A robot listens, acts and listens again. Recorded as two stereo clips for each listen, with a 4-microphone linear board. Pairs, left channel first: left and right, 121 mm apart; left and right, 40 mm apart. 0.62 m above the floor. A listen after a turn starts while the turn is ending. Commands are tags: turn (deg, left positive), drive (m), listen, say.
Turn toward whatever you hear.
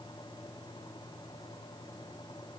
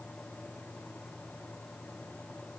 <listen/>
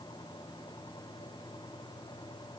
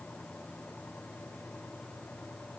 <listen/>
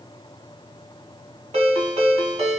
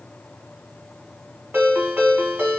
<turn deg="-65"/>
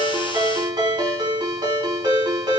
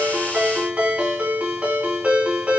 <turn deg="-40"/>
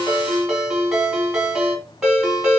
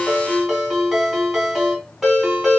<say>Found it: a ringtone, straight ahead.</say>